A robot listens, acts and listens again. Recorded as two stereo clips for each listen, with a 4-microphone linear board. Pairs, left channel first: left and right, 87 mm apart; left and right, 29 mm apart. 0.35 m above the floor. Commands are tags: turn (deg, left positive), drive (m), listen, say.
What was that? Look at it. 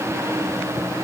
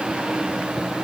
<listen/>
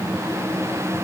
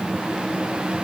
<listen/>
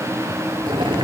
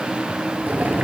<turn deg="-90"/>
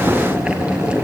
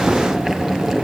<turn deg="-10"/>
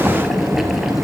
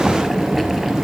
<say>Facing the boiling, 2 to 4 m away.</say>